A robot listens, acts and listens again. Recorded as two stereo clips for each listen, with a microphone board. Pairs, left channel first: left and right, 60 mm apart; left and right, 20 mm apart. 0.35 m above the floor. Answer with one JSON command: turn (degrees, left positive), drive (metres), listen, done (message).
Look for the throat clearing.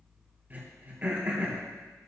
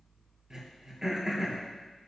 {"turn": -30}
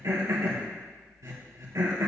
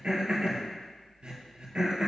{"turn": -115}
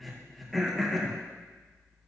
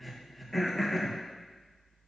{"done": "Found it: throat clearing, straight ahead, 2 to 4 m away."}